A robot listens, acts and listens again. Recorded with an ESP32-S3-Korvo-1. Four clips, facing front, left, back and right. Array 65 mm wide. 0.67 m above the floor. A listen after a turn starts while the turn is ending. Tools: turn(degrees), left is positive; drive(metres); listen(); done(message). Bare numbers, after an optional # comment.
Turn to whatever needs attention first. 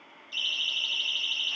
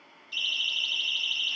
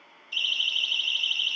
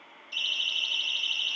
# The siren: 170° right.
turn(-170)
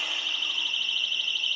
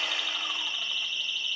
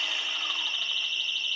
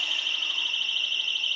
# The siren is now 45° right.
turn(-45)
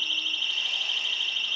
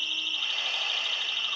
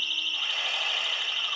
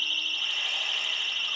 # The siren is now 10° right.
turn(-10)
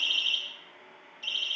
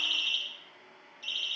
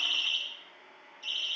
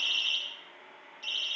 done("Facing the siren, over 4 m away.")